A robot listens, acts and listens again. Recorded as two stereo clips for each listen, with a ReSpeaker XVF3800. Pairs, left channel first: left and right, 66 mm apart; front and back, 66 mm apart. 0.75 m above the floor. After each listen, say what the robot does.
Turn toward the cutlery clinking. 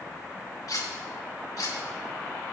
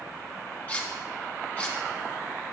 Turn 60° left.
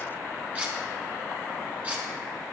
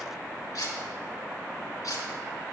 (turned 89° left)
Turn 25° right.
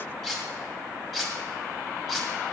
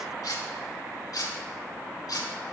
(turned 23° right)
Facing the cutlery clinking, 2 to 4 m away.